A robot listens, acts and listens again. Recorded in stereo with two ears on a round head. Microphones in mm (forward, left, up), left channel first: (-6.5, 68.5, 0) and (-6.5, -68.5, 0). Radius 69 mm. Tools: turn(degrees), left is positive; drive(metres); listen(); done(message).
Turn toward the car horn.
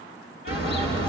turn(degrees=90)
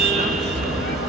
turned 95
done("Facing the car horn, over 4 m away.")